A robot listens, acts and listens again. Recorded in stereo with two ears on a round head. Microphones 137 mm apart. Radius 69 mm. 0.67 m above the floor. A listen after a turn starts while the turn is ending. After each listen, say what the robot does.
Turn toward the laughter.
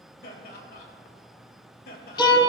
Turn 65° left.
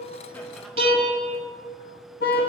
Keep listening.
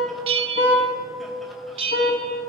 Keep listening.
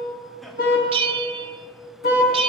I heard laughter, but can't make it out now. It was about straight ahead or 50° left.